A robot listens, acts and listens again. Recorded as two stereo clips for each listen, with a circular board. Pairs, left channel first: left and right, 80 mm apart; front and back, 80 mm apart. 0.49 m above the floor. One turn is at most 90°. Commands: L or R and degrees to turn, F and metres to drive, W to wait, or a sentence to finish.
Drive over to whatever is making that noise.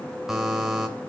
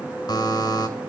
F1.0
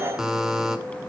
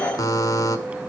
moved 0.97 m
R10
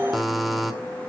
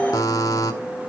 F1.0
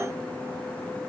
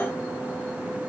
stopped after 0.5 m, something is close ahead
W
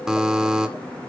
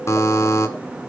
R10
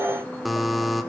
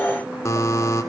I am next to the buzzer.